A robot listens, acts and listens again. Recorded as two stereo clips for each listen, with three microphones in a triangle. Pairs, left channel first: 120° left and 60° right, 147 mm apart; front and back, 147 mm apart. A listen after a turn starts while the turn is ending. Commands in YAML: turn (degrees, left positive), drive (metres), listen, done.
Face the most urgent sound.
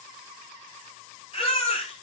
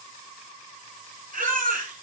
turn: 165
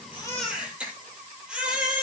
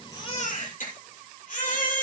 turn: 20
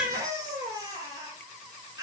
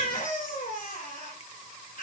done: "Facing the baby crying, over 4 m away."